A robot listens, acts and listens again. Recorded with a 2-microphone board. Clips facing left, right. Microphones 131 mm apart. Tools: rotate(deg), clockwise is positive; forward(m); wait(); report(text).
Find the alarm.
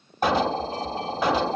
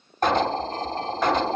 rotate(-30)
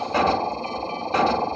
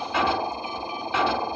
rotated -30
rotate(-145)
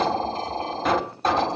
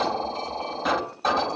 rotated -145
report("Found it: an alarm, straight ahead.")